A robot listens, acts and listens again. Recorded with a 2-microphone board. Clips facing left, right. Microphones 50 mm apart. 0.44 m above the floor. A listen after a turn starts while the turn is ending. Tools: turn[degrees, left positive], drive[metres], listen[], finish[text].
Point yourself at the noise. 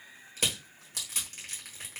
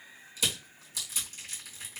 Thought: The crushing: about 55° left or 125° left.
Action: turn[55]
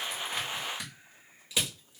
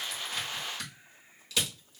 Thought: So it is at 25° left.
Action: turn[25]
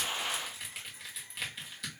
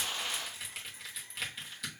Action: finish[Facing the crushing.]